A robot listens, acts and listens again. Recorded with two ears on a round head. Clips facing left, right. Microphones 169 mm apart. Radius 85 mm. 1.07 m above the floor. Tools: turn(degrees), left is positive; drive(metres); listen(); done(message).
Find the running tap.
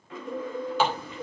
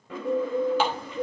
turn(degrees=90)
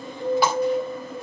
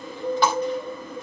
done("Facing the running tap, 2 to 4 m away.")